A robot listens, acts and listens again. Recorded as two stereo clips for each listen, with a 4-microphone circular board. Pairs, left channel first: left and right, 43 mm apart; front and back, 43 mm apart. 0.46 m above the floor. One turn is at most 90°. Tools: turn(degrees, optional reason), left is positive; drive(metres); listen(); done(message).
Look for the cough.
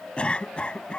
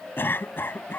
turn(degrees=25, reason="The cough: 25° left.")
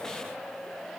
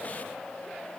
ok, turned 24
listen()
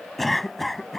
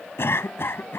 done("Found it: a cough, straight ahead.")